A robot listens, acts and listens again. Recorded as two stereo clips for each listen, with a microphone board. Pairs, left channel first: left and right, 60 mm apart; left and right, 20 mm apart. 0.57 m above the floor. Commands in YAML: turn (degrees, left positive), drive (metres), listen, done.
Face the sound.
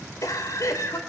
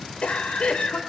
turn: 65
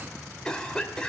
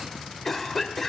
turn: 15
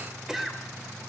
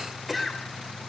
done: "Facing the cough, 2 to 4 m away."